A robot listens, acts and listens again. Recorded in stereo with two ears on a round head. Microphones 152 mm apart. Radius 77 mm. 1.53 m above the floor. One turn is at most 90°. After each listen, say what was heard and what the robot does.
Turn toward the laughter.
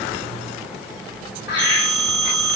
The laughter: about 65° left or 115° left. Turn 65° left.
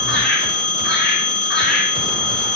So it is at 60° left. Turn 60° left.
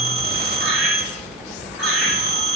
Keep listening.
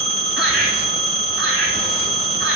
Facing the laughter, over 4 m away.